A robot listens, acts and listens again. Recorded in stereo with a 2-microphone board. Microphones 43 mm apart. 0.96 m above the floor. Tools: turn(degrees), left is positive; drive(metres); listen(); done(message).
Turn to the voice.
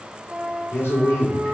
turn(degrees=90)
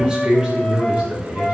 turn(degrees=-30)
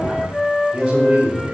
turn(degrees=-25)
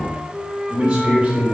turn(degrees=-15)
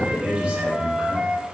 done("Found it: a man speaking, straight ahead.")